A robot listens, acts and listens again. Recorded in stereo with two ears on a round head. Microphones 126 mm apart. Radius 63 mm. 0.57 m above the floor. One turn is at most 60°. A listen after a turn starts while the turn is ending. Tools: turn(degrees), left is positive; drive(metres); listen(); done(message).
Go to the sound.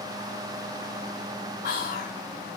turn(degrees=60)
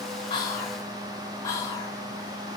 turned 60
turn(degrees=25)
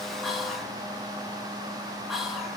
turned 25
drive(metres=1.0)
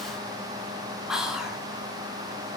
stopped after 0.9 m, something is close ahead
done("Arrived at the whispering, straight ahead.")